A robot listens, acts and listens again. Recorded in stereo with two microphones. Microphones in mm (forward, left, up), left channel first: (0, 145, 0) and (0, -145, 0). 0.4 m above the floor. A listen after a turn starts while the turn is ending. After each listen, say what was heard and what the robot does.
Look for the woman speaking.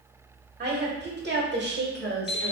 The woman speaking: about 35° right or 145° right. Turn 35° right.
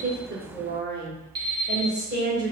The woman speaking: about 35° right or 145° right. Turn 35° right.
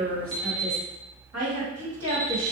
So it is at 120° right. Turn 120° right.
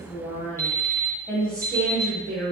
Facing the woman speaking, 2 to 4 m away.